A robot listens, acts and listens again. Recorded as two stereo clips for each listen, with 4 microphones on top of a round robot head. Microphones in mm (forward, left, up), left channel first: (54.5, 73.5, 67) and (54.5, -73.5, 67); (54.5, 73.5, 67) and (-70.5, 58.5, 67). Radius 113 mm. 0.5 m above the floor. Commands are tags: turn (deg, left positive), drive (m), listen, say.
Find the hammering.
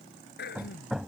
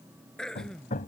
<say>Found it: hammering, straight ahead.</say>